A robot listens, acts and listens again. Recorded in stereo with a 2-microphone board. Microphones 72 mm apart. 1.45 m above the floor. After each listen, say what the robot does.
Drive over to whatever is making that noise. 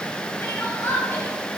Turn 35° left.
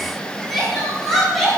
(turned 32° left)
Drive 1.0 m forward.
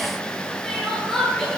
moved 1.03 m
Drive 1.0 m forward.
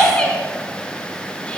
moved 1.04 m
Turn 20° left.
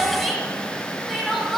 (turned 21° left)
Drive 1.0 m forward.
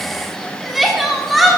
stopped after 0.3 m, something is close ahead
Arrived at the crying, straight ahead.